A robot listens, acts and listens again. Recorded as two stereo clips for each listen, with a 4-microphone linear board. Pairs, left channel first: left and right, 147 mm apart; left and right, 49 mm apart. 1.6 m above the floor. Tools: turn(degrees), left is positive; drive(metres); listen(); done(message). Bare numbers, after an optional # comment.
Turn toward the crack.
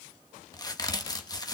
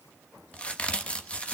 # The crack: about 25° left or 155° left.
turn(25)
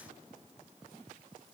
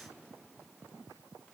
listen()
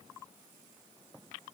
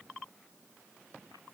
done("I heard a crack, but can't make it out now. It was about straight ahead or 130° left.")